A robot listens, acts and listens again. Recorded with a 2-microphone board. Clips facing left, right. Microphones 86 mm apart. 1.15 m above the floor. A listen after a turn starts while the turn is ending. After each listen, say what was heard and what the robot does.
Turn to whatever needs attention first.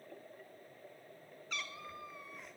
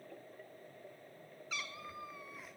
Keep listening.
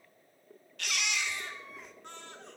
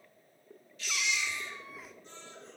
The baby crying: about 60° left or 120° left. Turn 60° left.
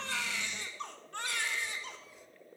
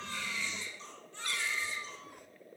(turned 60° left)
So it is at 60° left. Turn 60° left.
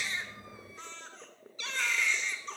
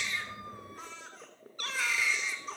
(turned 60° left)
Facing the baby crying.